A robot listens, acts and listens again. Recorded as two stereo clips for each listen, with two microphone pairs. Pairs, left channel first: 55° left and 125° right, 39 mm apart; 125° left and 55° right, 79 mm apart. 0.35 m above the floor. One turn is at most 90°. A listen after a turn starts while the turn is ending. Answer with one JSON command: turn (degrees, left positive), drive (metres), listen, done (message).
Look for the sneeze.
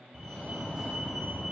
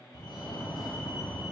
{"listen": true}
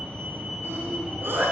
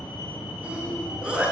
{"turn": -90}
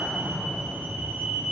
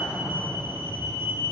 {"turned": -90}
{"turn": -40}
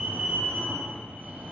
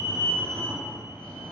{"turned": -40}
{"done": "I heard a sneeze from this way, but can't make it out now."}